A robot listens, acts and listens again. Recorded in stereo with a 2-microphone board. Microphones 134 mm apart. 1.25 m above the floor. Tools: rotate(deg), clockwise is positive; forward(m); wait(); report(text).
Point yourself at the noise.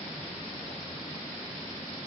wait()
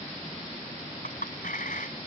rotate(-90)
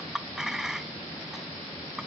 report("Found it: a clink, straight ahead.")